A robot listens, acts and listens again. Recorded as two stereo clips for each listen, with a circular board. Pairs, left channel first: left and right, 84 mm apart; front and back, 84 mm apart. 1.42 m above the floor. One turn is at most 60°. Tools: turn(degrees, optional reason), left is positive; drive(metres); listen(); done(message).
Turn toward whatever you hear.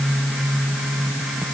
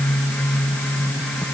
listen()
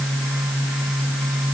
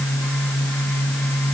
listen()
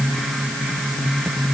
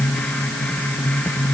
done("I can't make out anything to turn to.")